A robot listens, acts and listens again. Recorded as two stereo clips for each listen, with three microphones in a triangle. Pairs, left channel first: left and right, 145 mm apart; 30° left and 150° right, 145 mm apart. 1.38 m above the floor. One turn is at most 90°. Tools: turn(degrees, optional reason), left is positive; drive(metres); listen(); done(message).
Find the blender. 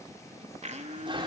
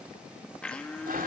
turn(degrees=-55, reason="The blender: 55° right.")
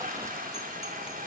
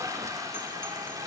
listen()
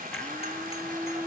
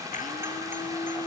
turn(degrees=10, reason="The blender is now 10° left.")
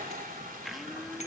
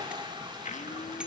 listen()
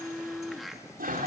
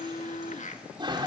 done("Facing the blender.")